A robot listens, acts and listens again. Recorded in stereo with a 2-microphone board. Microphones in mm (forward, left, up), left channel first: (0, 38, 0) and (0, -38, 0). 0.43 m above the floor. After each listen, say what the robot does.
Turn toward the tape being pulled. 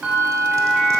Keep listening.
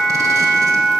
Keep listening.
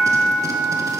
I can't make out tape being pulled, only a bell.